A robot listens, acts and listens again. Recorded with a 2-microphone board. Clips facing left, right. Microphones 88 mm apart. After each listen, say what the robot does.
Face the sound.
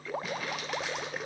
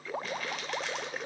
Turn 30° left.
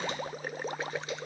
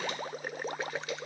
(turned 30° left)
Keep listening.
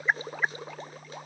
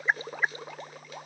Keep listening.
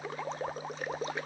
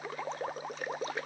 I heard crumpling, but can't make it out now. It was about 25° right or 145° left.